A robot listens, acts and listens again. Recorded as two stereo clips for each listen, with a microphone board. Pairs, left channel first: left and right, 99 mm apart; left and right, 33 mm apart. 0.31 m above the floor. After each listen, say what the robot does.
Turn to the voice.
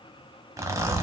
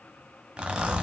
Keep listening.
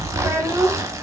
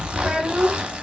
Turn 30° right.
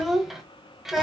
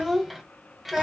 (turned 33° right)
Found it: a child speaking, straight ahead, under 1 m away.